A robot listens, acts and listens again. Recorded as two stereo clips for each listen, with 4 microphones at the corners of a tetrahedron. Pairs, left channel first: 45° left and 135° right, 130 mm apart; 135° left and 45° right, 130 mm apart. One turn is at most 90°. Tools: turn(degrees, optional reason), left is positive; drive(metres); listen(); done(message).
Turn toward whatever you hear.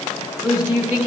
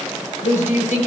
turn(degrees=90, reason="The woman speaking: 155° left.")
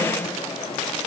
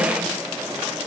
turn(degrees=65, reason="Nothing new. It was at 65° left.")
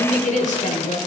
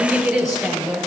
turn(degrees=45, reason="The woman speaking is now 45° left.")
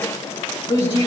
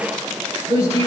done("Found it: a woman speaking, straight ahead, over 4 m away.")